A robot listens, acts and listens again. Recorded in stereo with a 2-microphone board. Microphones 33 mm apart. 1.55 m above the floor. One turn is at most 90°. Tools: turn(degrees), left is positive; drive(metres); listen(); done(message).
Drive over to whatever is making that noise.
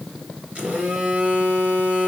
turn(degrees=-40)
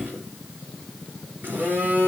turn(degrees=-90)
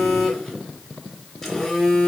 drive(metres=1.0)
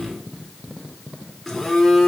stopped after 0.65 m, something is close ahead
done("Something is in my way. I am facing the phone buzzing but have not reached it.")